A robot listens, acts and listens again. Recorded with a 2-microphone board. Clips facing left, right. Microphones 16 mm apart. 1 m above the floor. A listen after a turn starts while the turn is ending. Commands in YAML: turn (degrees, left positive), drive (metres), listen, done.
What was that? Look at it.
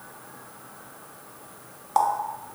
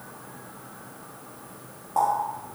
turn: 60
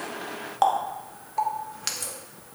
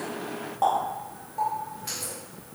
turn: 60
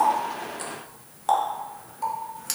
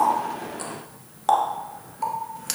turn: -10
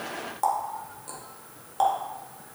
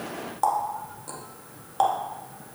turn: -10
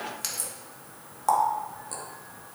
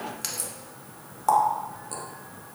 done: "Facing the running tap."